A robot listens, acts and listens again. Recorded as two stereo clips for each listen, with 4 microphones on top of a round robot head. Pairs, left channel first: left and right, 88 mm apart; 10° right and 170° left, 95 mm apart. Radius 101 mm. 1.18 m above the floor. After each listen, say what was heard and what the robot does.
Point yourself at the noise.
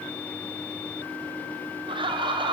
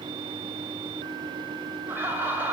The laughter: 115° right. Turn 115° right.
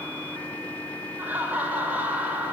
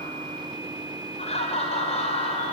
The laughter is now 15° right. Turn 15° right.
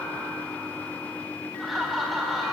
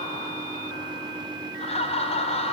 Facing the laughter.